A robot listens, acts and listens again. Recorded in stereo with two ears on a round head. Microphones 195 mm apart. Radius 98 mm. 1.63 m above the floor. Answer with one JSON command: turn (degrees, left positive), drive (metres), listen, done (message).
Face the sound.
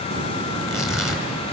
{"turn": 30}
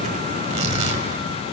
{"turn": -35}
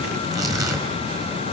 {"turn": -15}
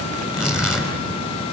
{"done": "Found it: tearing paper, straight ahead."}